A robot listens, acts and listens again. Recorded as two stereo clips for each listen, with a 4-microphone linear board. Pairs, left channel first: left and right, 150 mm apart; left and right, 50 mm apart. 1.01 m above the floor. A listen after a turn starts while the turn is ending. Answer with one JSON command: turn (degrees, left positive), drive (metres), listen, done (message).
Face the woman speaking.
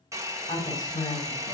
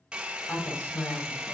{"turn": 65}
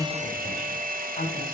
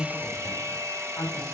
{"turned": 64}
{"turn": 50}
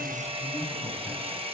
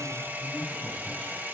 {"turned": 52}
{"listen": true}
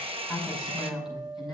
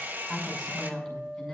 {"done": "Facing the woman speaking, over 4 m away."}